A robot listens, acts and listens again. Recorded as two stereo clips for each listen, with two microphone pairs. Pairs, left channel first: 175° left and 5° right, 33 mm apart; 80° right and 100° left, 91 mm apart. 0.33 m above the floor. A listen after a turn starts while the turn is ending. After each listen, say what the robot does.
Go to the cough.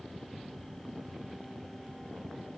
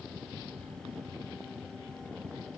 Keep listening.
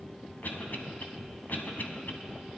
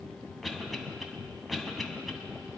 Turn 170° right.
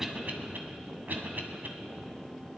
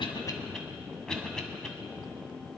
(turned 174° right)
Drive 1.0 m forward.
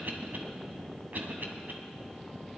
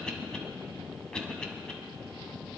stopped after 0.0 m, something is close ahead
Blocked. The cough is further on, straight ahead.